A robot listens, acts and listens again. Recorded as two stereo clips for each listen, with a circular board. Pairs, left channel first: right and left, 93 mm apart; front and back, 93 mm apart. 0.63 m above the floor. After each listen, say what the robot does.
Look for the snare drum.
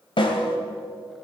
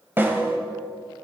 Turn 115° right.
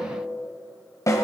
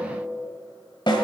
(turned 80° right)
Turn 35° right.
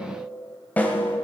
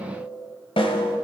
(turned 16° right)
Turn 15° right.
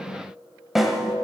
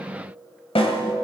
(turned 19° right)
Found it: a snare drum, straight ahead.